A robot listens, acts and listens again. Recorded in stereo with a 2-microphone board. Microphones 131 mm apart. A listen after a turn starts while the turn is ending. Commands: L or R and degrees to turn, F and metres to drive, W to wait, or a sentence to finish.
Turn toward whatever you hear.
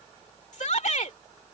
L65
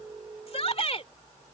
L50
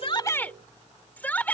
L15
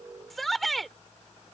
Found it: a shout, straight ahead.